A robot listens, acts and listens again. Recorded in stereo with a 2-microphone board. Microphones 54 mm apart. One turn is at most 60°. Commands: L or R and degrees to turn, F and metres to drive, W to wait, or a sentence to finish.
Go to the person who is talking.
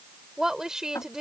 R30
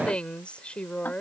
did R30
L20
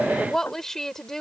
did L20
L10
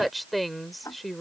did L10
F1.0
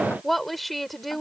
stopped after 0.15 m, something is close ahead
Blocked. The woman speaking is further on, straight ahead.